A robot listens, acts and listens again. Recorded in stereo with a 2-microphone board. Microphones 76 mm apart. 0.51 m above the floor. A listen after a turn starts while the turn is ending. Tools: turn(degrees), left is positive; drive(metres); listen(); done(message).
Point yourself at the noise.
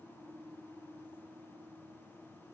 listen()
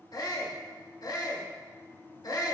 turn(degrees=60)
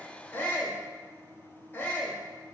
turn(degrees=30)
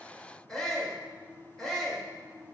turn(degrees=10)
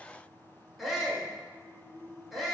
done("Found it: a shout, straight ahead.")